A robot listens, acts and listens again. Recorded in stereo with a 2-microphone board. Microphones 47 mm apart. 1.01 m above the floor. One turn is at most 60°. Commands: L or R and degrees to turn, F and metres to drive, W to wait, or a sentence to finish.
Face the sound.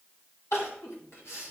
L60
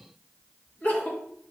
L40
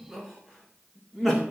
Found it: crying, straight ahead, 2 to 4 m away.